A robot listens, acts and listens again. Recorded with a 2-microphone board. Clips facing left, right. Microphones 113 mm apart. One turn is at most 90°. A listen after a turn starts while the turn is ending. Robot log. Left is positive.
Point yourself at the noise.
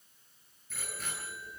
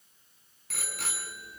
cmd yaw -90
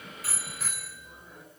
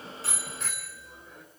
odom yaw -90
end: Facing the bicycle bell.